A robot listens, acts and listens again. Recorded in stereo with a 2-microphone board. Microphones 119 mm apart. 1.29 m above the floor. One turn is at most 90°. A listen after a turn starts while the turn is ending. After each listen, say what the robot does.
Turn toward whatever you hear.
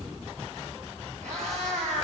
Turn 90° right.
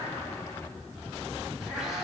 Found it: a cat meowing, straight ahead, over 4 m away.